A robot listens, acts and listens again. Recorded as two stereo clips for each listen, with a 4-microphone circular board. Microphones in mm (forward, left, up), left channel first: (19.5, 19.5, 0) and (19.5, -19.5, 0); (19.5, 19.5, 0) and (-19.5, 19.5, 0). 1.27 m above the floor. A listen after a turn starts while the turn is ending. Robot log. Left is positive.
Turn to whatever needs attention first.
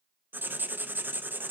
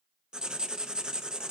cmd idle
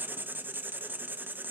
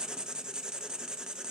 cmd idle
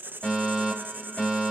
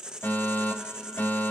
note: The fire alarm: 20° left.
cmd yaw +20
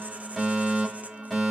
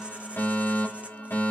end: Found it: a fire alarm, straight ahead, over 4 m away.